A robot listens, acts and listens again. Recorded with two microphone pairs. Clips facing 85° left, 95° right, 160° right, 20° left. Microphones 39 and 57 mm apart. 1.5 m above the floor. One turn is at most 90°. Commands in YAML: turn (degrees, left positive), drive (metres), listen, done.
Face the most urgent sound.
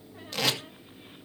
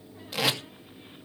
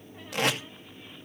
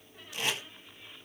listen: true
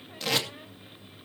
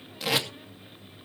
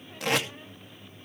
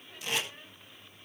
listen: true
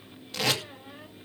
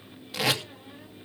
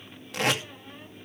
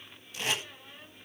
done: "I can't make out anything urgent, only tape being pulled."